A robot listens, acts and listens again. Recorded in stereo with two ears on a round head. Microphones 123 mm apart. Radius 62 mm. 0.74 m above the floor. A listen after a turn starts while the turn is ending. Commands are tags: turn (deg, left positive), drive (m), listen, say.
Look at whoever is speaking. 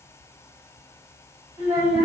<turn deg="-20"/>
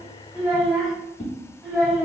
<say>Facing the child speaking, 2 to 4 m away.</say>